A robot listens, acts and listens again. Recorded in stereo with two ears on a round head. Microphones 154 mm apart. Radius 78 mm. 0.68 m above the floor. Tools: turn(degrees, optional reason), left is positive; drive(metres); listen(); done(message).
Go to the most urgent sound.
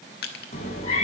listen()
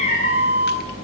turn(degrees=-50, reason="The alarm: about 50° right or 130° right.")
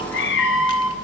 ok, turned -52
drive(metres=1.0)
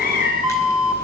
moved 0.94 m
drive(metres=1.0)
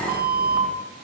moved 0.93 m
drive(metres=1.0)
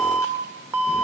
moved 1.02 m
turn(degrees=-15, reason="The alarm is now 15° right.")
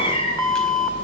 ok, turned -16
drive(metres=1.0)
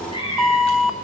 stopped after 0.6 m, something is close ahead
done("Arrived at the alarm, straight ahead.")